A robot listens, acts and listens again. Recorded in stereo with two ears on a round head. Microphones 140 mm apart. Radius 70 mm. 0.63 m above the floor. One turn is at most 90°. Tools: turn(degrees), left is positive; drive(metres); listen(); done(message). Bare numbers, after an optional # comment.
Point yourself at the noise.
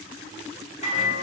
# The microwave: about 45° left or 135° left.
turn(45)
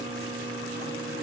# So it is at 85° left.
turn(85)
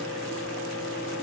# The microwave is now 15° left.
turn(15)
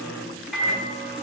done("Facing the microwave.")